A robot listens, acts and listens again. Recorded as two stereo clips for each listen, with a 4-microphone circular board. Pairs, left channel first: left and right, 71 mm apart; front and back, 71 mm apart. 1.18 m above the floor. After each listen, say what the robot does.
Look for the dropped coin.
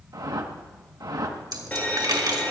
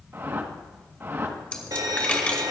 Turn 75° right.
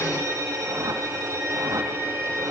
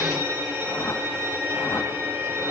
I heard a dropped coin from this way, but can't make it out now.